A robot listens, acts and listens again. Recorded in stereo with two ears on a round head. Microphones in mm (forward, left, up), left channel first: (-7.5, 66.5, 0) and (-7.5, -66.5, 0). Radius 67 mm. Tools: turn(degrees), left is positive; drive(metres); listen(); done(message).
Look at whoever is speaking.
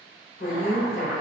turn(degrees=65)
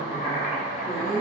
turn(degrees=20)
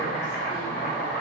listen()
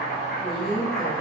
done("Facing the woman speaking.")